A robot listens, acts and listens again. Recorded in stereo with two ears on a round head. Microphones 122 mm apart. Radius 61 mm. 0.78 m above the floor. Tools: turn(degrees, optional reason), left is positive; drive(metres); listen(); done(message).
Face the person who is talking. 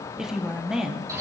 turn(degrees=-30)
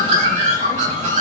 listen()
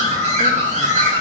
listen()
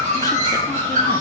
done("I heard a woman speaking, but can't make it out now. It was about 25° left or 145° right.")